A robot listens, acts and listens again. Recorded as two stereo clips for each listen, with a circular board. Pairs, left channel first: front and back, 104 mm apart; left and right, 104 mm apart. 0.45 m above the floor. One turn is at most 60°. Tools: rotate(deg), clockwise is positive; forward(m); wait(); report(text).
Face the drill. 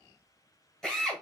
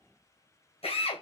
rotate(-60)
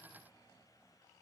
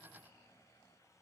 rotate(-25)
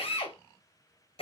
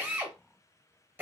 rotate(20)
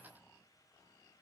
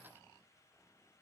wait()
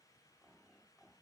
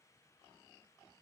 wait()
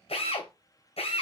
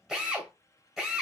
report("Found it: a drill, straight ahead, 1 to 2 m away.")